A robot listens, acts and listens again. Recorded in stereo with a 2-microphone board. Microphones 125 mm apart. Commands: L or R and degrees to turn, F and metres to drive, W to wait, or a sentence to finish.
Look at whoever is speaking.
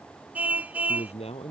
L55
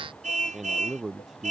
Found it: a man speaking, straight ahead.